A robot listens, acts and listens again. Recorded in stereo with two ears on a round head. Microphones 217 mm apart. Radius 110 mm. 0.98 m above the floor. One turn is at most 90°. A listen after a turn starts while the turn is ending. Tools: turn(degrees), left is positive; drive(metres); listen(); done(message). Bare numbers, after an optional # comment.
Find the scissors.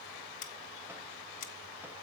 # The scissors: about 35° left or 145° left.
turn(35)
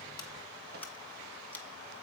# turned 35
# So it is at 10° left.
turn(10)
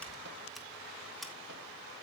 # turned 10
done("Found it: scissors, straight ahead, 1 to 2 m away.")